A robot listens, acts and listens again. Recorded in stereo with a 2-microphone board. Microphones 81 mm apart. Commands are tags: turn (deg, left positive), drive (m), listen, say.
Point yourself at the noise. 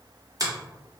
<turn deg="-50"/>
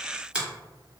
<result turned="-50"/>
<turn deg="-15"/>
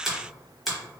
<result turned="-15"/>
<say>Facing the finger snap.</say>